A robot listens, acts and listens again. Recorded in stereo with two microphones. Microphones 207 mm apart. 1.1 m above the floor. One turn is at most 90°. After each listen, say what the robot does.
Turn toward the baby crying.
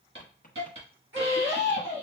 Turn 75° right.
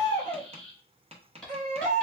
Turn 35° right.
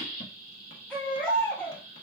Found it: a baby crying, straight ahead, 1 to 2 m away.